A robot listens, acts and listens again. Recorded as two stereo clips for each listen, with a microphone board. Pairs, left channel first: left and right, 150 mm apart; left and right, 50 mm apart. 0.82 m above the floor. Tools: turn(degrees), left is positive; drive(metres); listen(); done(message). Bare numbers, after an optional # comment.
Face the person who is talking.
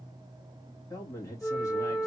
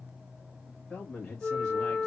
# The man speaking: about 25° left or 155° left.
turn(25)
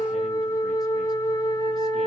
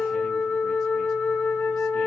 listen()
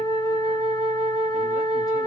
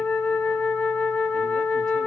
listen()
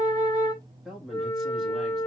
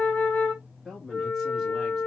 done("Facing the man speaking, 1 to 2 m away.")